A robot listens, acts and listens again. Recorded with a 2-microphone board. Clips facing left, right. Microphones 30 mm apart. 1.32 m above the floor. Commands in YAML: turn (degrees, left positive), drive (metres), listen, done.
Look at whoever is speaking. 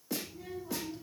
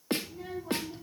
turn: -30
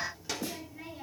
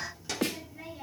done: "Facing the child speaking, 2 to 4 m away."